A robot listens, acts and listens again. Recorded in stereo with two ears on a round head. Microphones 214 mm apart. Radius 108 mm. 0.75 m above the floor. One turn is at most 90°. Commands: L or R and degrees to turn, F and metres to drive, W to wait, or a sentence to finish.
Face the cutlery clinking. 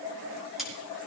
L30
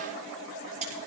R30
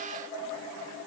W
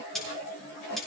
Found it: cutlery clinking, straight ahead, over 4 m away.